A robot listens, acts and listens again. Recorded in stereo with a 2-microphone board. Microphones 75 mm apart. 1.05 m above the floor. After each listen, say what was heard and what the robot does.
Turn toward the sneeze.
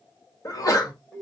The sneeze: about 50° left or 130° left. Turn 50° left.
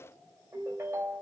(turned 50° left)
Keep listening.
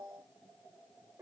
I heard a sneeze, but can't make it out now. It was about straight ahead or 80° left.